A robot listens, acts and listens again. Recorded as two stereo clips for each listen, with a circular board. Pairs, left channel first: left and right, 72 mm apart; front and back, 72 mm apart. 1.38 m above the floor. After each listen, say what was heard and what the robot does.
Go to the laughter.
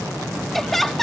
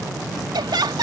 The laughter: 175° left. Turn 175° left.
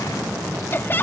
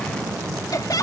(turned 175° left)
The laughter is now 30° left. Turn 30° left.
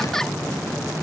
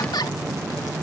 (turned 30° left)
Keep listening.
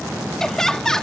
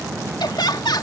The laughter is now 10° left. Turn 10° left.
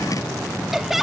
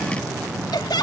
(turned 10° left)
Drive 1.0 m forward.
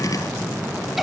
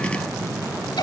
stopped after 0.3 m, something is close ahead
Keep listening.
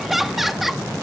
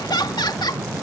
Blocked. The laughter is further on, straight ahead.